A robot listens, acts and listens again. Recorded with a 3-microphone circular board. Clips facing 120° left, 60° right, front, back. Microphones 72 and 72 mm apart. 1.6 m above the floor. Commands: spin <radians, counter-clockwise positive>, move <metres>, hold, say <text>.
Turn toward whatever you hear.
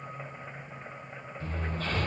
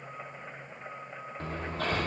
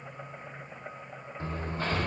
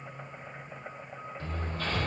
spin -1.13
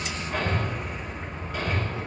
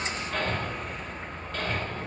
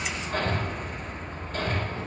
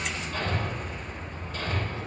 spin 0.70
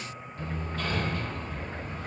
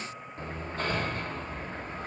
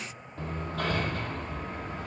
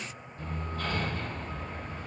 say Facing the hammering, 1 to 2 m away.